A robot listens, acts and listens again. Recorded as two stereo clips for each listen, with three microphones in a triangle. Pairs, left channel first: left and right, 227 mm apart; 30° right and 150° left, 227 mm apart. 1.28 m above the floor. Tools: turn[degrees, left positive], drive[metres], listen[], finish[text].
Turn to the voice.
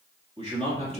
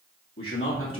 Thought: The man speaking: 30° right.
Action: turn[-30]
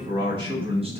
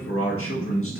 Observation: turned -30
Thought: The man speaking is now 25° right.
Action: turn[-25]
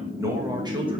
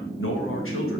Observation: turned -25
Thought: The man speaking is now 25° right.
Action: turn[-25]
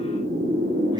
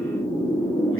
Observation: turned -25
Action: listen[]
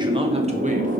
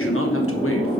Action: listen[]
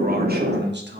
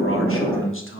Thought: The man speaking is now 55° right.
Action: turn[-55]
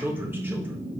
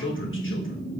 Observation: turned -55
Thought: The man speaking is now 10° right.
Action: turn[-10]
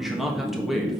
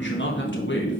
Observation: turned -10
Action: finish[Found it: a man speaking, straight ahead, 1 to 2 m away.]